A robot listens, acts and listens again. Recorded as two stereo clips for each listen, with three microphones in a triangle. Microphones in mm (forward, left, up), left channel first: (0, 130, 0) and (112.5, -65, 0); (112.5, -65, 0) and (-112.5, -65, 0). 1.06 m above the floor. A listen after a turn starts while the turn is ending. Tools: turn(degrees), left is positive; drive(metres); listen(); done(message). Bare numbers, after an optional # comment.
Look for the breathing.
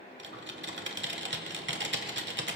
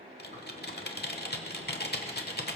listen()
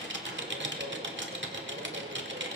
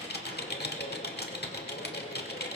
listen()
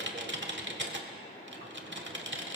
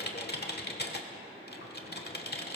done("I can't make out breathing to turn to.")